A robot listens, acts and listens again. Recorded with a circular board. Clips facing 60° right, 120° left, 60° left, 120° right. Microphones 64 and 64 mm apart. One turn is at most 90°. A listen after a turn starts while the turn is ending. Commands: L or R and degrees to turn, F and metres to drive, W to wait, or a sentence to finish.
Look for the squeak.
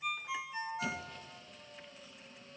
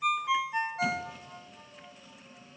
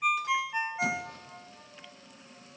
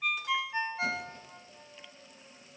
L35
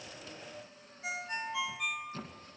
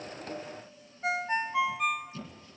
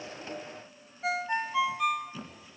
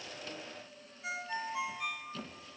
R20
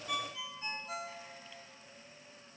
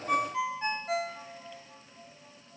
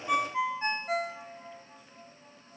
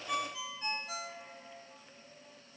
W
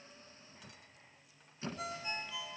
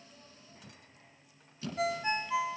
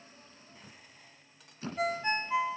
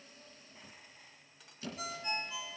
Facing the squeak, 2 to 4 m away.